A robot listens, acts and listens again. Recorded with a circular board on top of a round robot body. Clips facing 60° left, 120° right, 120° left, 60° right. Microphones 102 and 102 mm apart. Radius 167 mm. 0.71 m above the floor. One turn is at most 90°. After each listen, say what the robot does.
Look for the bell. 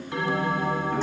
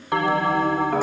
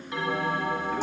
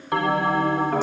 Turn 90° right.
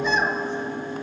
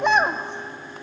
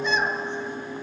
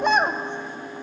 Turn 15° left.
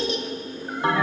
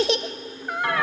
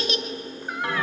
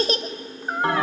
Facing the bell.